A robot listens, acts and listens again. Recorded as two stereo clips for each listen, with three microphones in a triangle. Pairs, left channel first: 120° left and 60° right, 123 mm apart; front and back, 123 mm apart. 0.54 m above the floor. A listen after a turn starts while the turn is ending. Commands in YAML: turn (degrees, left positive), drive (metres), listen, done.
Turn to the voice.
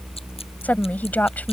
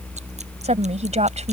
turn: -165
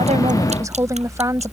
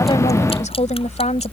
done: "Facing the woman speaking."